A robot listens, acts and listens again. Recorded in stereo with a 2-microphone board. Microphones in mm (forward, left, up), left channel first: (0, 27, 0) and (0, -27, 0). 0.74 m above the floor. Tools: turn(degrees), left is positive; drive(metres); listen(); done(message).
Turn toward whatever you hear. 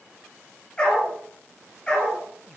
turn(degrees=20)
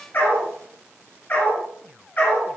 turn(degrees=35)
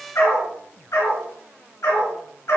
turn(degrees=115)
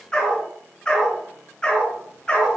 turn(degrees=15)
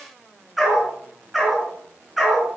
done("Found it: a dog barking, straight ahead.")